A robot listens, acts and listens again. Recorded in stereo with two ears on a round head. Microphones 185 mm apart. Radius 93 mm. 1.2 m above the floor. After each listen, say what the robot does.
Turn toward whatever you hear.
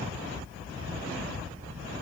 Keep listening.
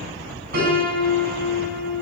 Turn 50° right.
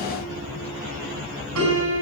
Turn 85° right.
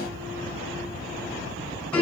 Found it: a piano, straight ahead, over 4 m away.